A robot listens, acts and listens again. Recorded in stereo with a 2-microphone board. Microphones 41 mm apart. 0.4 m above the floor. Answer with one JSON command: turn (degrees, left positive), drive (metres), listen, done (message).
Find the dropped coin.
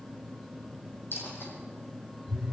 {"turn": 70}
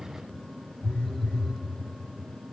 {"listen": true}
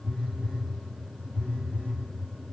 {"done": "I heard a dropped coin, but can't make it out now. It was about straight ahead or 40° left."}